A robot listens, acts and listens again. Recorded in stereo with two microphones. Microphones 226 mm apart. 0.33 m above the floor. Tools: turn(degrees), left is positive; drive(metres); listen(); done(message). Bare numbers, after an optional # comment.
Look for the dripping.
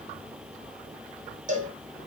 listen()
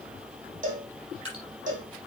# The dripping: about 65° right or 115° right.
turn(-65)
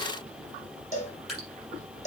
done("Found it: dripping, straight ahead.")